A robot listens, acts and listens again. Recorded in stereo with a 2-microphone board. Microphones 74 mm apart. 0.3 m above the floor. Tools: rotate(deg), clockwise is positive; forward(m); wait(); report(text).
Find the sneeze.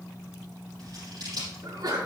rotate(65)
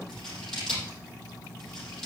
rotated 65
wait()
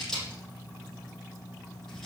report("I heard a sneeze, but can't make it out now. It was about straight ahead or 50° right.")